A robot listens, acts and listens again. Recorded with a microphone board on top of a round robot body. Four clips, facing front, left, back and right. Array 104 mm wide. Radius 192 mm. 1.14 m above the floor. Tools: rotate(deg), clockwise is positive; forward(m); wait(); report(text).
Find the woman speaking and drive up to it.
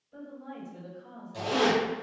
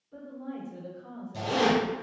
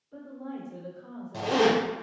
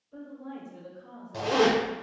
rotate(-160)
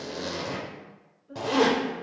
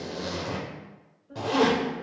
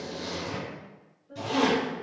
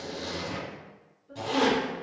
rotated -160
rotate(45)
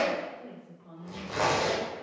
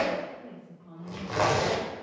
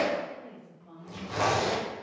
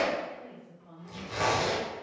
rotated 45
forward(1.0)
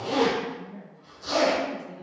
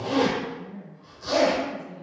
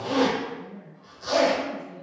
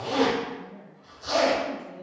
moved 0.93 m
rotate(-10)
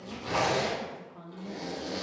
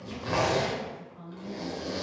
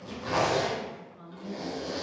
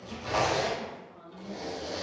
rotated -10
forward(1.0)
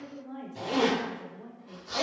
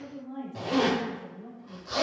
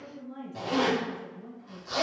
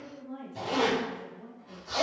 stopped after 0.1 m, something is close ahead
report("Arrived at the woman speaking, straight ahead.")